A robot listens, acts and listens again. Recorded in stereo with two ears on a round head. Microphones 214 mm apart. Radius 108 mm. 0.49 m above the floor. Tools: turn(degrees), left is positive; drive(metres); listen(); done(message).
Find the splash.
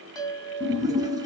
turn(degrees=-15)
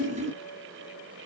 turn(degrees=-150)
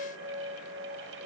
done("I heard a splash from this way, but can't make it out now.")